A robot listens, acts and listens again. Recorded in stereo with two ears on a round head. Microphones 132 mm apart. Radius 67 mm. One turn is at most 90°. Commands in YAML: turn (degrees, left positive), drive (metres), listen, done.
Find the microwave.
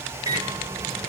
turn: -25
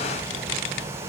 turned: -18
listen: true
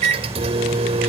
turn: -90
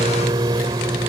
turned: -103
turn: -30
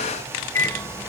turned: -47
turn: 15
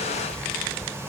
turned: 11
listen: true
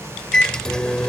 done: "Facing the microwave."